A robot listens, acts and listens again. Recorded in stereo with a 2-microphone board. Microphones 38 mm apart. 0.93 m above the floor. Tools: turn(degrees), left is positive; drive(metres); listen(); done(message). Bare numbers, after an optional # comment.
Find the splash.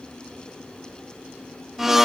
listen()
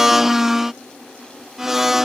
listen()
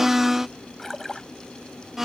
turn(30)
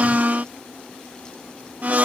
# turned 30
listen()
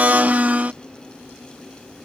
done("I heard a splash, but can't make it out now. It was about 20° right or 140° left.")